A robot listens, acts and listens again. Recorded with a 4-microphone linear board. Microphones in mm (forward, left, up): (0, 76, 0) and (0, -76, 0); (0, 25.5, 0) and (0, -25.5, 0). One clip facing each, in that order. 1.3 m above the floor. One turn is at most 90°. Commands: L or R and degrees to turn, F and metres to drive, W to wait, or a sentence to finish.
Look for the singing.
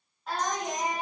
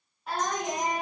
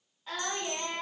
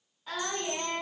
L30
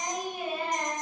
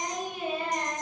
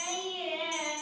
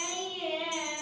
L90
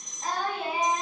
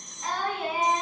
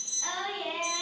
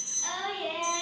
L25
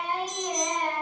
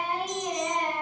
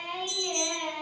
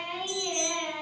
R15
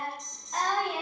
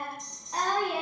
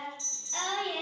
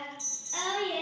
R15
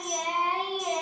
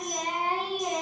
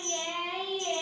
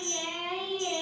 Found it: singing, straight ahead.